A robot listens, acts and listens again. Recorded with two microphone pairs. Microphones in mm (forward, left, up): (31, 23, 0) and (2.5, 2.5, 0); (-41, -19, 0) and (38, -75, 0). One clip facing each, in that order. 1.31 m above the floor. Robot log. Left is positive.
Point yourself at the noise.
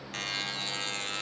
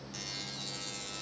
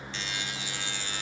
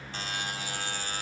end: Facing the buzzer, under 1 m away.